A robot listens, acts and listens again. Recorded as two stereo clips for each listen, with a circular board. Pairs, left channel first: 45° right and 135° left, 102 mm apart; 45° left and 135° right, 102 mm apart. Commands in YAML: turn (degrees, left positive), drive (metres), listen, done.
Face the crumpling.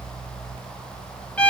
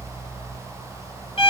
listen: true
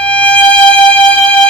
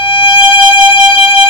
listen: true
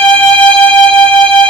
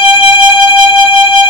done: "I can't make out crumpling to turn to."